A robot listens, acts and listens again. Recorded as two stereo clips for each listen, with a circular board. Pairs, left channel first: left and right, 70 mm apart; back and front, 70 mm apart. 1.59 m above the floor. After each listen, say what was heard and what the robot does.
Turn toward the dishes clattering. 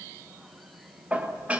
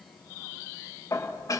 The dishes clattering: 155° right. Turn 155° right.
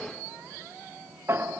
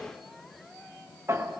The dishes clattering is now 40° right. Turn 40° right.
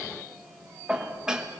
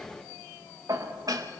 The dishes clattering is now 10° right. Turn 10° right.
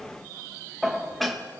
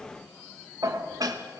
Found it: dishes clattering, straight ahead.